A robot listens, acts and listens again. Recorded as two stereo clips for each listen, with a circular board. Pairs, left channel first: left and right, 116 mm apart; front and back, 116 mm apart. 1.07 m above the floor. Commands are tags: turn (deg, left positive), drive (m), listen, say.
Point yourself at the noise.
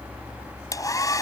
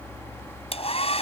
<turn deg="30"/>
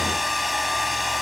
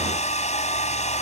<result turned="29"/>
<say>Found it: a hair dryer, straight ahead.</say>